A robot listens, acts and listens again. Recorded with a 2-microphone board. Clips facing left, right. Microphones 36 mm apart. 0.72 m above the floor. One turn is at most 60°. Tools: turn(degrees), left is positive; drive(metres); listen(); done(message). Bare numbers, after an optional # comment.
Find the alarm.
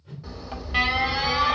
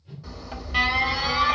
# The alarm: about 20° left or 160° left.
turn(20)
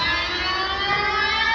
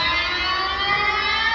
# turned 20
done("Facing the alarm, 1 to 2 m away.")